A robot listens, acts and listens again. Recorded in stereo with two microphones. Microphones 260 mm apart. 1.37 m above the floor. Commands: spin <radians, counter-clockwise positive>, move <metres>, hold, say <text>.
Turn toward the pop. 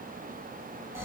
hold
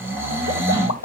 spin 1.57
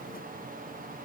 say Facing where the pop came from. I can't hear it now.